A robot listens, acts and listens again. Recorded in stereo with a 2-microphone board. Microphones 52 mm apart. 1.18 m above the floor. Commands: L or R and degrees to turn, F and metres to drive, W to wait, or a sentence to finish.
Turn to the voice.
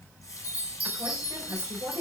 R70
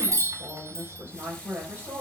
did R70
R40
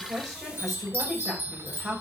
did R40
Found it: a woman speaking, straight ahead.